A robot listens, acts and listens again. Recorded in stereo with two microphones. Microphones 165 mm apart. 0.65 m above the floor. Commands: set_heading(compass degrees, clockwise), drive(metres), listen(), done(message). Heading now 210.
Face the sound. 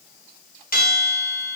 set_heading(150)
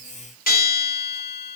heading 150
set_heading(90)
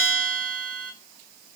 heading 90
set_heading(80)
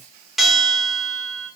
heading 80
done("Facing the bell, under 1 m away.")